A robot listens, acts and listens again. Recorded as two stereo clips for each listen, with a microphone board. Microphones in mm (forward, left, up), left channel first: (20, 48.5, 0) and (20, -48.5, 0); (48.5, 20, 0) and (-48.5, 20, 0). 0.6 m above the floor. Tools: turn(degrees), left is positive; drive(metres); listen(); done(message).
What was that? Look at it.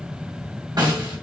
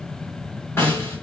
turn(degrees=-60)
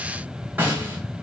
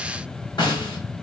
turn(degrees=-20)
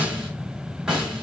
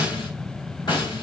turn(degrees=-10)
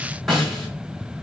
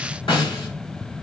done("Found it: a snare drum, straight ahead.")